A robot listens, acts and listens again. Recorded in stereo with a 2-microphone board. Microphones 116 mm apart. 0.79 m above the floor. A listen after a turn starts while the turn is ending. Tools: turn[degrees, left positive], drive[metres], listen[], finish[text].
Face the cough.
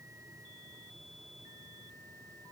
Action: listen[]
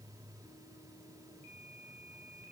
Action: listen[]
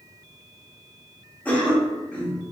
Action: turn[30]
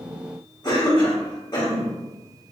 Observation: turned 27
Thought: So it is at 140° left.
Action: turn[140]
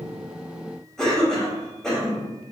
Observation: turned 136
Action: finish[Facing the cough, 1 to 2 m away.]